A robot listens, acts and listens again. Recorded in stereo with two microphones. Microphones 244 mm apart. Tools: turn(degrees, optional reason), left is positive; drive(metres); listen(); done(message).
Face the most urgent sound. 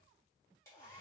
listen()
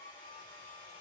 listen()
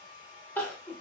turn(degrees=30)
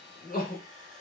turn(degrees=145, reason="So it is at 145° left.")
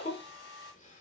turn(degrees=30, reason="The crying is now 30° left.")
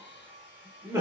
turn(degrees=-10, reason="The crying is now 10° right.")
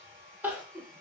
done("Facing the crying.")